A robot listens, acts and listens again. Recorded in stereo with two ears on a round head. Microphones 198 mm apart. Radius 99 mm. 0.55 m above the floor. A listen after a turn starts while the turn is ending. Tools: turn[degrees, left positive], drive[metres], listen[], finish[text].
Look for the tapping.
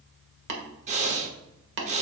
Thought: The tapping: about 55° right or 125° right.
Action: turn[-55]
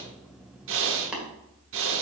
Action: finish[Facing the tapping.]